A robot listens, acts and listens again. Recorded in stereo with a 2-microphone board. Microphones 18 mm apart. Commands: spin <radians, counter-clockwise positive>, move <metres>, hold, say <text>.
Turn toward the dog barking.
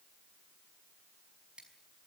hold
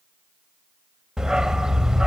spin -0.70
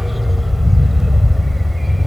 spin -0.17
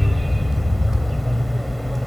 say Facing the dog barking.